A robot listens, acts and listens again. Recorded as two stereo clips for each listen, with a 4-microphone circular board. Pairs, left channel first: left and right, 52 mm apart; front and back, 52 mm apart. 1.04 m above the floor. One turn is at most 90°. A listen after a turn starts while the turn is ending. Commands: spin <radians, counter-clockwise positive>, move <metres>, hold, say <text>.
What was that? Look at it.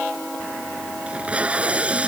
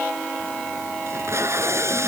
spin -1.57
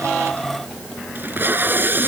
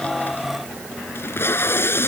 spin -0.70
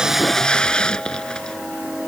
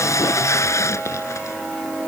spin 0.26
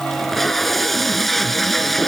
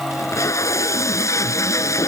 say Facing the tape being pulled.